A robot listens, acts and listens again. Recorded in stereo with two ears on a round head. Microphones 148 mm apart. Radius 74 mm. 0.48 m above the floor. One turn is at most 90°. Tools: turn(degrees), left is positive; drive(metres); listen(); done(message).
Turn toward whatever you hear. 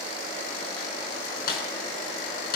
turn(degrees=60)
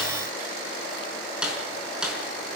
done("Facing the snare drum, over 4 m away.")